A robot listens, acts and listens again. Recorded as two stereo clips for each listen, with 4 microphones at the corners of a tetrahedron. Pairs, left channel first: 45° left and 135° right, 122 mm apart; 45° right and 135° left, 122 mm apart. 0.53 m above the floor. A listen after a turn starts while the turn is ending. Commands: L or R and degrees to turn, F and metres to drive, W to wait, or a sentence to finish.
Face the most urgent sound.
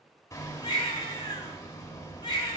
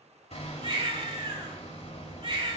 L95
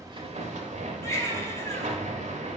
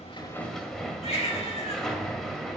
R20
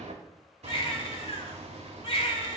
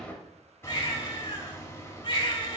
Found it: a baby crying, straight ahead, 1 to 2 m away.